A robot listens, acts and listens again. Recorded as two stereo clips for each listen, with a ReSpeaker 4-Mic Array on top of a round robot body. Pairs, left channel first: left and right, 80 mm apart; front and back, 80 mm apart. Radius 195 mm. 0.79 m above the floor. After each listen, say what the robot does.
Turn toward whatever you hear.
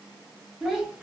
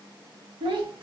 Turn 170° right.
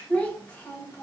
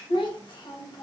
Turn 25° left.
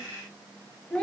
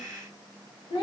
Turn 15° left.
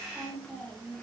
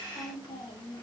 Turn 15° left.
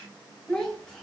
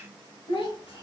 Turn 10° left.
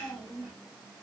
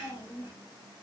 Facing the child speaking.